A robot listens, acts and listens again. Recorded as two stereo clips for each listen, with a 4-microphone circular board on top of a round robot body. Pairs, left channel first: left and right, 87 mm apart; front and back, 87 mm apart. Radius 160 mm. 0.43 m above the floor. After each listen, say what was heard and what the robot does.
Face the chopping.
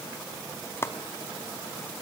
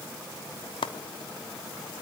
The chopping: 25° left. Turn 25° left.
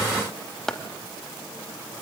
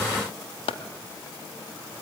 Found it: chopping, straight ahead, under 1 m away.